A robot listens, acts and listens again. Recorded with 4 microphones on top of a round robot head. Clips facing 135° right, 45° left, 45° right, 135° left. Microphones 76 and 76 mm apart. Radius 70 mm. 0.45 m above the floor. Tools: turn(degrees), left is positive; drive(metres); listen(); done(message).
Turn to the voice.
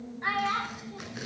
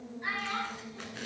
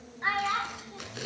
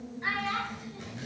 turn(degrees=-95)
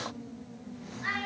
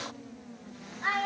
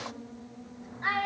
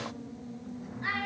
done("Found it: a child speaking, straight ahead.")